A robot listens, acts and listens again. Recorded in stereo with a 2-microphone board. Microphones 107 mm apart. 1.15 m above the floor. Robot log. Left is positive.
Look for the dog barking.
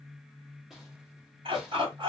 note: The dog barking: about 55° right or 125° right.
cmd yaw -55
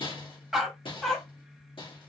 end: Facing the dog barking, 1 to 2 m away.